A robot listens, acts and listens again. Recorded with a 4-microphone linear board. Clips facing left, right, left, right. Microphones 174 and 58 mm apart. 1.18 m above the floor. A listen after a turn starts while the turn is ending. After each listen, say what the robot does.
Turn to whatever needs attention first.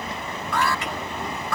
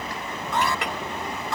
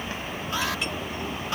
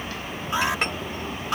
Turn 20° right.
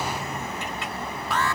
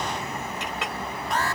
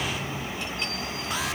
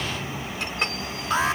Turn 140° right.
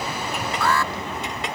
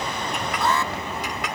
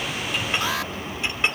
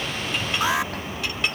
Turn 20° right.
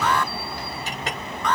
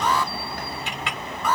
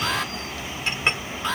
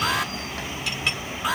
Turn 10° right.
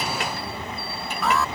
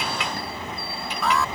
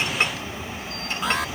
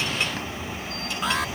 Facing the alarm.